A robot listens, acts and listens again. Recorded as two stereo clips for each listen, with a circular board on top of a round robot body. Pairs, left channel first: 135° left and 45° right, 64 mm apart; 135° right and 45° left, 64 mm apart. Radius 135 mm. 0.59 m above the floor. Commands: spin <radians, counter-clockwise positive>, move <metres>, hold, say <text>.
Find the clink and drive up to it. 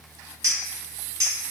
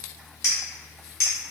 spin -1.48
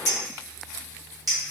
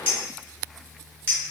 spin -0.26
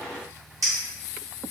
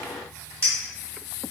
spin -0.17
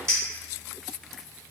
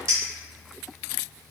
move 1.0
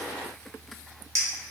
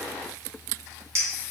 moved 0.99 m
move 1.0
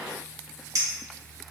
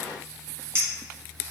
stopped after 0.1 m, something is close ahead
say I am next to the clink.